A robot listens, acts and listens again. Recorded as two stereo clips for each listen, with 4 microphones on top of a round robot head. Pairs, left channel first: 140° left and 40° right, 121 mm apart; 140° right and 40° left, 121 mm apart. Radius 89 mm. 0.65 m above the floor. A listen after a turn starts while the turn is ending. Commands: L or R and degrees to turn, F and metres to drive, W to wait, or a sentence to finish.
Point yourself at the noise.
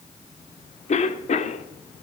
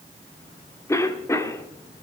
L150
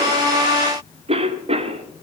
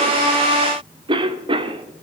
Facing the cough.